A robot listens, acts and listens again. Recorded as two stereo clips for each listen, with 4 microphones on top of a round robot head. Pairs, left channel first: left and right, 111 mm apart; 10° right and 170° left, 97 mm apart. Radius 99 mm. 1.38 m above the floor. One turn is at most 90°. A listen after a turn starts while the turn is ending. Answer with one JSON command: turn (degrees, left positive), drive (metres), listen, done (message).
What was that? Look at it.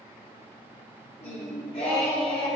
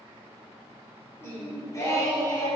{"turn": 35}
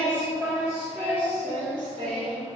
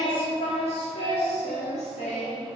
{"turn": -45}
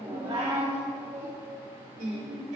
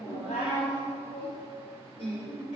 {"turn": -55}
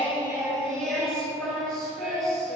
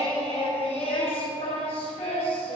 {"done": "Found it: singing, straight ahead, 1 to 2 m away."}